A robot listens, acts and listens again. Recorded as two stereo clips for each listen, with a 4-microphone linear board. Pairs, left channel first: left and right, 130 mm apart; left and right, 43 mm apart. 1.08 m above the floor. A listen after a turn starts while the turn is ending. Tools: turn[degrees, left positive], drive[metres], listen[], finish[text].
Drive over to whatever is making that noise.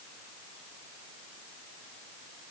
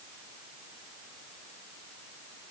Action: listen[]
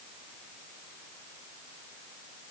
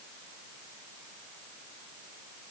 Action: listen[]
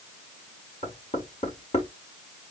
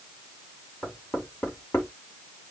Thought: The knocking: about 55° left or 125° left.
Action: turn[55]
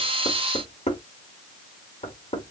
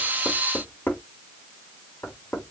Thought: So it is at 65° left.
Action: turn[65]
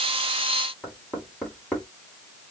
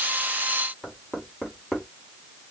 Thought: The knocking is now 10° left.
Action: turn[10]
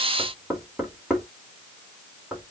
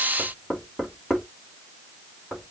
Action: drive[1.0]
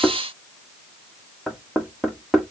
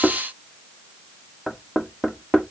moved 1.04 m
Action: drive[1.0]
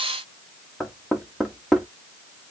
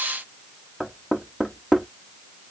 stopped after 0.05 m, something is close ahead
Action: finish[I am next to the knocking.]